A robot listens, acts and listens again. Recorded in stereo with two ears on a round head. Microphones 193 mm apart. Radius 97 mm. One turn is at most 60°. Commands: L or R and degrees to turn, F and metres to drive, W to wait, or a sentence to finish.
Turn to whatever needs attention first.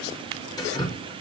W
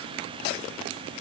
W
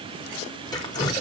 I can't make out anything urgent, only dripping.